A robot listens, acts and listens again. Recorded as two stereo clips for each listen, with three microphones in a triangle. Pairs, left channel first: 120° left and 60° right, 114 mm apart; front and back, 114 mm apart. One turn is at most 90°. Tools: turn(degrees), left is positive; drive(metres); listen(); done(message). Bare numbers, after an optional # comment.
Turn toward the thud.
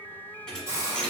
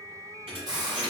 # The thud: 160° right.
turn(-90)
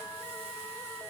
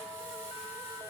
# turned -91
# Nothing new. It was at 65° right.
turn(-65)
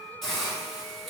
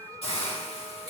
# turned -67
done("Facing where the thud came from. I can't hear it now.")